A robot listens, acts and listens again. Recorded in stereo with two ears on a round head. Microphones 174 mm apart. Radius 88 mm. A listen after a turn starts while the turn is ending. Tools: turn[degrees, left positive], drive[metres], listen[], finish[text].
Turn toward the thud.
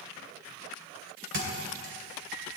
Thought: The thud: about 65° right or 115° right.
Action: turn[-65]
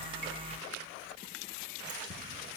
Action: listen[]
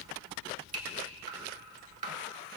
Action: finish[I heard a thud, but can't make it out now. It was about straight ahead or 50° right.]